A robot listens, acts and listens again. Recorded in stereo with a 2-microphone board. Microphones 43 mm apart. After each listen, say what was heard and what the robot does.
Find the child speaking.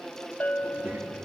The child speaking: about 35° right or 145° right. Turn 35° right.
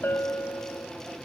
Keep listening.
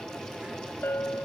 Keep listening.
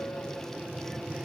So it is at 15° right. Turn 15° right.
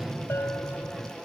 Facing the child speaking.